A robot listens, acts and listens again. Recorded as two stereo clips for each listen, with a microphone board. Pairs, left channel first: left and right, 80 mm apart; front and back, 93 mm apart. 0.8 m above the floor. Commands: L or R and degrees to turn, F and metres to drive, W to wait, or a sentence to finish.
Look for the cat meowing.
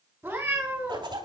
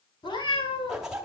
R20
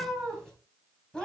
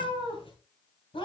L10
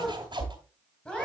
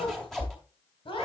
L10
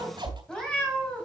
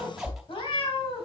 L15
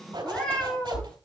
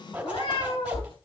L15
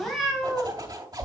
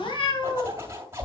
Facing the cat meowing.